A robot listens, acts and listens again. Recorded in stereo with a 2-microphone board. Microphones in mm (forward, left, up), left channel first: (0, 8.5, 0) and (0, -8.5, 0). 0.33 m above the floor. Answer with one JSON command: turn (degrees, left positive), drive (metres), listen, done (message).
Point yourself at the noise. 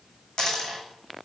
{"turn": 40}
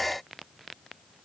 {"listen": true}
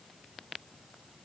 {"done": "I heard a dropped coin, but can't make it out now. It was about straight ahead or 100° left."}